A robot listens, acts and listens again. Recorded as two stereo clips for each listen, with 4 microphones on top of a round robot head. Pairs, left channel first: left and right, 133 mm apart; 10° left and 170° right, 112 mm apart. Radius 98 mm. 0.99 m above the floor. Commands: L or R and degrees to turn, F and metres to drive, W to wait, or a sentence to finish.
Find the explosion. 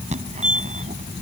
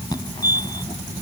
W
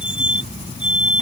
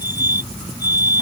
W
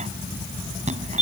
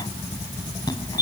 I can't make out an explosion to turn to.